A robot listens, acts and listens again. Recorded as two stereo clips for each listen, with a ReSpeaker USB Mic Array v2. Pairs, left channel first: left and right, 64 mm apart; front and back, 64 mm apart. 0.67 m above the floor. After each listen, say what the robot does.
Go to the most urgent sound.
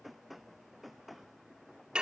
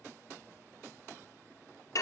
Keep listening.
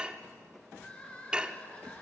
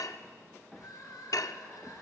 Turn 20° left.
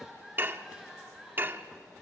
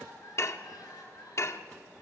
Drive 1.0 m forward.
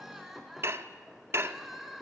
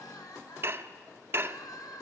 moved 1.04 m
Drive 1.0 m forward.
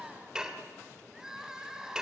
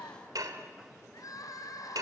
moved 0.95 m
Turn 10° right.
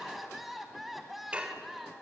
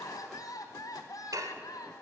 Drive 1.0 m forward.
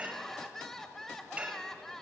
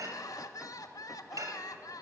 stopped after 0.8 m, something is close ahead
Turn 10° left.
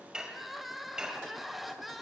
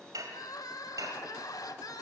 I am next to the crying.